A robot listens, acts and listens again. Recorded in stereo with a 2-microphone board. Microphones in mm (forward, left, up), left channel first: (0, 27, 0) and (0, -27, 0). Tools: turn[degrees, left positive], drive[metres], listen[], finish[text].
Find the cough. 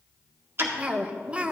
Thought: The cough: about 20° right or 160° right.
Action: turn[-20]
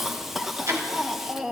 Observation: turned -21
Action: finish[Found it: a cough, straight ahead.]